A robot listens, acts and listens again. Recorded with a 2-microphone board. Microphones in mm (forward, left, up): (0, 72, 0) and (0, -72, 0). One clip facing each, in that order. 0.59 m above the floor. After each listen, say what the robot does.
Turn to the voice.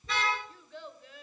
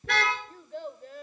Turn 50° right.
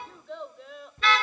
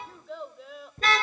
Facing the child speaking, 1 to 2 m away.